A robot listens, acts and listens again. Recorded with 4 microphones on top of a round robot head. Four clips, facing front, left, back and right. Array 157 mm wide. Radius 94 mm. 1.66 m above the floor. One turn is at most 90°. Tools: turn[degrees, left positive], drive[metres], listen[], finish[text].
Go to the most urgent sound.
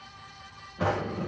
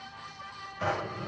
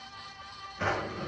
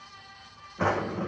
Action: listen[]
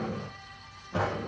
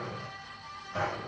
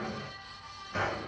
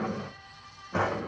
Action: listen[]
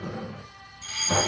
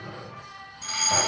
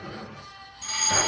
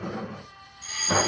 Thought: The fire alarm: 125° left.
Action: turn[90]
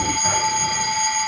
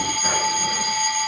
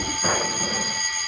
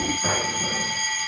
Thought: The fire alarm is now 25° left.
Action: turn[25]
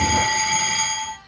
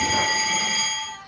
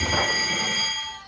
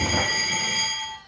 Action: drive[1.0]
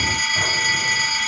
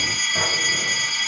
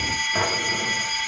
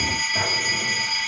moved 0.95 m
Action: drive[1.0]
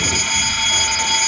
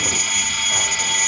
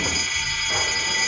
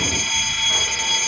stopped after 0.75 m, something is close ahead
Thought: The fire alarm is now 10° left.
Action: turn[10]
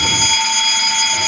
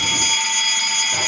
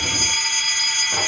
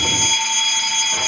Action: finish[I am next to the fire alarm.]